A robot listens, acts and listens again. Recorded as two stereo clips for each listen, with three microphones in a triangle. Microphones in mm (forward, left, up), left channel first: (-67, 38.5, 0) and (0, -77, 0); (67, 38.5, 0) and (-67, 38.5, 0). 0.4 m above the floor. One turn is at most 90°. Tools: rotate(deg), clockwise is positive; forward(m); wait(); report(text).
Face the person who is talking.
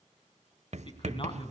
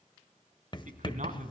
rotate(-90)
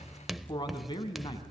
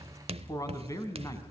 rotate(-65)
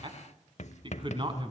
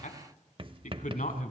rotate(10)
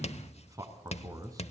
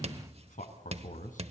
report("Facing the man speaking, 2 to 4 m away.")